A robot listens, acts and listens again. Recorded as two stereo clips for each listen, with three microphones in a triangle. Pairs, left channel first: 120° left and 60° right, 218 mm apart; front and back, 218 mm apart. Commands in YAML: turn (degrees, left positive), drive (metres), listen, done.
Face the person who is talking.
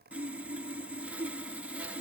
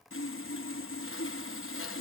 listen: true
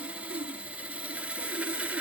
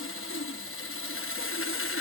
listen: true
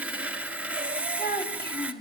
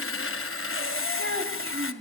turn: 160
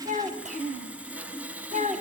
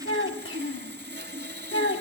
turn: -10
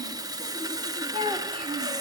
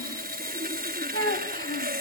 done: "Facing the child speaking."